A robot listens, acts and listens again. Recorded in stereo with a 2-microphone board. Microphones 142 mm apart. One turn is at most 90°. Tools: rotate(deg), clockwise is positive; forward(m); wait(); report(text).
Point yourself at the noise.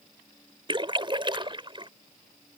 rotate(35)
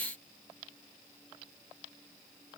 wait()
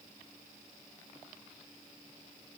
report("I heard a splash, but can't make it out now. It was about straight ahead or 110° right.")